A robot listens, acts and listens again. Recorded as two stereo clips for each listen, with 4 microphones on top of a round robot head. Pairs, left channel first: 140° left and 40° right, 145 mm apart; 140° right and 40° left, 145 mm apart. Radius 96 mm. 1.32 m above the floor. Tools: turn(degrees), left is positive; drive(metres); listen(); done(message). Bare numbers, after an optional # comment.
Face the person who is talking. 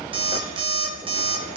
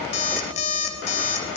listen()
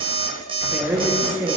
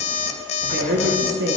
# The woman speaking: 35° left.
turn(35)
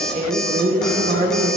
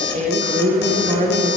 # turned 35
done("Found it: a woman speaking, straight ahead, 1 to 2 m away.")